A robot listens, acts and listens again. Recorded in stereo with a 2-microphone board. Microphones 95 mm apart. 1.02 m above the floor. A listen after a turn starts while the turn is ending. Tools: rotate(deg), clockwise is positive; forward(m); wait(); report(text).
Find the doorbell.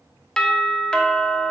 rotate(-30)
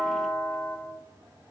rotate(-140)
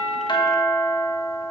rotate(-40)
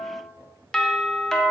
rotate(-10)
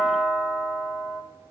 report("Facing the doorbell.")